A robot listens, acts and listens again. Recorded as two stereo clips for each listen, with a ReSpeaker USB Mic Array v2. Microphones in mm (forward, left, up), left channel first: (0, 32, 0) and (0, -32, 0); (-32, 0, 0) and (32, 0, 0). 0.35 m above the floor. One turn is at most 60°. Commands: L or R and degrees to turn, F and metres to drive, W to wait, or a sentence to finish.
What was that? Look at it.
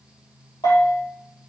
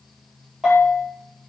L60
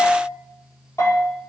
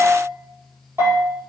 L45
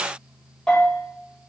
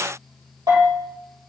L15
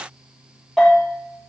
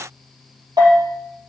Found it: a bell, straight ahead, over 4 m away.